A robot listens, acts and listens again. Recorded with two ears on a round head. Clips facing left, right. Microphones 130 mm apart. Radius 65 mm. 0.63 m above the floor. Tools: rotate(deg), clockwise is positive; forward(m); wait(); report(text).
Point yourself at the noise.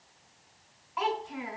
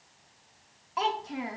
rotate(45)
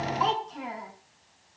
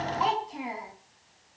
rotate(10)
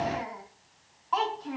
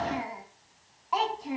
rotate(15)
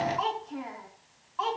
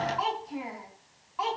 rotate(10)
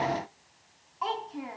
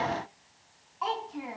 report("Facing the child speaking.")